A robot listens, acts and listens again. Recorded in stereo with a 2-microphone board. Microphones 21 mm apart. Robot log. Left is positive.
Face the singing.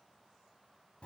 cmd idle
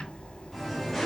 cmd yaw +30
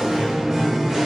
note: So it is at 20° right.
cmd yaw -20
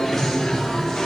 note: The singing is now 15° left.
cmd yaw +15
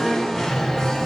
note: The singing is now 10° left.
cmd yaw +10
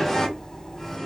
end: Facing the singing.